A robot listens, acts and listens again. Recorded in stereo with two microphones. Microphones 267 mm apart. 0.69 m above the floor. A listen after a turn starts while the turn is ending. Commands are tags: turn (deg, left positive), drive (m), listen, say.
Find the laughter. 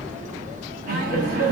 <turn deg="-55"/>
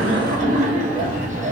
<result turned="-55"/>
<turn deg="-35"/>
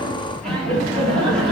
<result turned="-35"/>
<say>Facing the laughter, 1 to 2 m away.</say>